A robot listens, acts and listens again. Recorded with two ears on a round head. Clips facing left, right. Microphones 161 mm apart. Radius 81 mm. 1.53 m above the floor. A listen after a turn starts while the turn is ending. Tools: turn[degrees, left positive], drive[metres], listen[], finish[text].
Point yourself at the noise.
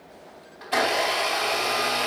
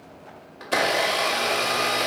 Thought: The blender: about 60° right or 120° right.
Action: turn[-60]
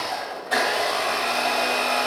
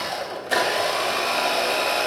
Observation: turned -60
Thought: So it is at 40° right.
Action: turn[-40]
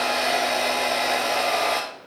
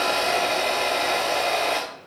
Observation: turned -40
Action: finish[Found it: a blender, straight ahead, 2 to 4 m away.]